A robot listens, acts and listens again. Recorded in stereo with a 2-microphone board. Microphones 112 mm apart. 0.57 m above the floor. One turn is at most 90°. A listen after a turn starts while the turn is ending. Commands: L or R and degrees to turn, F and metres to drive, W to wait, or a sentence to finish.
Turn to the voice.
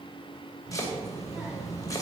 R30
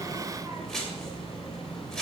R90
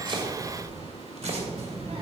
R55
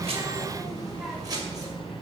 Found it: a child speaking, straight ahead, 2 to 4 m away.